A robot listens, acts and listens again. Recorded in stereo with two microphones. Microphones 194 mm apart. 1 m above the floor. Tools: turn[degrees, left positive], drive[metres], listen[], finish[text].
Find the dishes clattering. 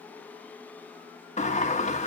Action: listen[]
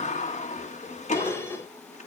Action: turn[30]
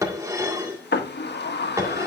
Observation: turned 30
Thought: So it is at 15° right.
Action: turn[-15]
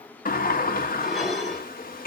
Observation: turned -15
Action: finish[Found it: dishes clattering, straight ahead, 1 to 2 m away.]